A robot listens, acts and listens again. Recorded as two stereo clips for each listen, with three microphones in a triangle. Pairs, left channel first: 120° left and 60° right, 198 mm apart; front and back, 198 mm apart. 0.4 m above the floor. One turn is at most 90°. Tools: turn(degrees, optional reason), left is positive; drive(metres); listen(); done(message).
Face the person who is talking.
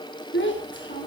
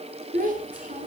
turn(degrees=90, reason="The child speaking: 135° left.")
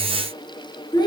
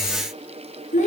turn(degrees=50, reason="The child speaking is now 50° left.")
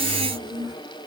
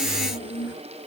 turn(degrees=10, reason="The child speaking is now 10° left.")
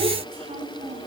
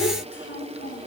done("Facing the child speaking, over 4 m away.")